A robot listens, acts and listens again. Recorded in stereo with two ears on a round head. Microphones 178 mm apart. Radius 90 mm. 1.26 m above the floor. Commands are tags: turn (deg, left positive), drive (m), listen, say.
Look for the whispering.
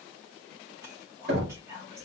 <turn deg="-30"/>
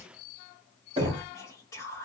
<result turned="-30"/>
<turn deg="15"/>
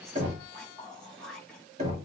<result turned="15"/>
<say>Found it: whispering, straight ahead, 1 to 2 m away.</say>